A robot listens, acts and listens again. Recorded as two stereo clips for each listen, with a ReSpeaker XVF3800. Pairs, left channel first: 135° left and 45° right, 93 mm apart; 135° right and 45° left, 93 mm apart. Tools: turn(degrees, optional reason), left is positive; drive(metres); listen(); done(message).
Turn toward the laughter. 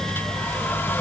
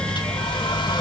listen()
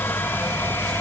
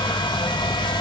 listen()
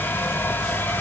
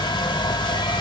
done("I can't make out laughter to turn to.")